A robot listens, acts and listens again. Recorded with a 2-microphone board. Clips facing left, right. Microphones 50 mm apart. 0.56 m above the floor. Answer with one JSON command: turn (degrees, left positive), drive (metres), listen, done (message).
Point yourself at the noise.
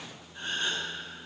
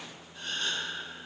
{"turn": 30}
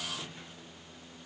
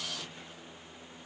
{"listen": true}
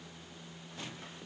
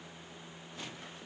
{"done": "I heard a gasp, but can't make it out now. It was about straight ahead or 120° left."}